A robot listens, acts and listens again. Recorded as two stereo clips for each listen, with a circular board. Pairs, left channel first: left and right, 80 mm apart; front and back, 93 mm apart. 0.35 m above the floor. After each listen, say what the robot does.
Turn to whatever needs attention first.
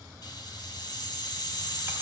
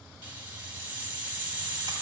Keep listening.
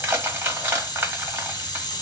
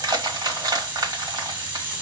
Keep listening.
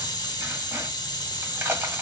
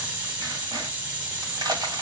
I can't make out anything urgent, only crushing and a hiss.